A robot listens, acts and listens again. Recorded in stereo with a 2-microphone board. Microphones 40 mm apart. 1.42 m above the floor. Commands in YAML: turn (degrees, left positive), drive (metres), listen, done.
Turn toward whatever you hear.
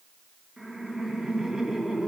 turn: -30
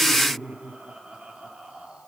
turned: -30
turn: -155
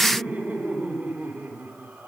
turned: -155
turn: -55
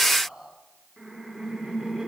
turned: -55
turn: -10
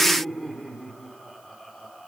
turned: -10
done: "Found it: laughter, straight ahead."